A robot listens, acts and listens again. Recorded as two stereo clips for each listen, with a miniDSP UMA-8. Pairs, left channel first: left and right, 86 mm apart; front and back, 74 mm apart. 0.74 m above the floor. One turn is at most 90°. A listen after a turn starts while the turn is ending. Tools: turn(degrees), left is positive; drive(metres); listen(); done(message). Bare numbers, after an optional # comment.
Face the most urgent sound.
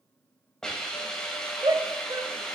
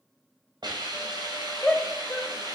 # The shout: 75° right.
turn(-75)
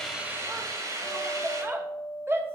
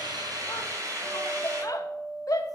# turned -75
# The shout is now 30° right.
turn(-30)
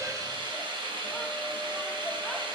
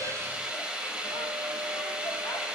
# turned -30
listen()
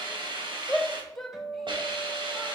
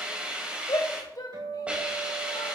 done("Found it: a shout, straight ahead, 1 to 2 m away.")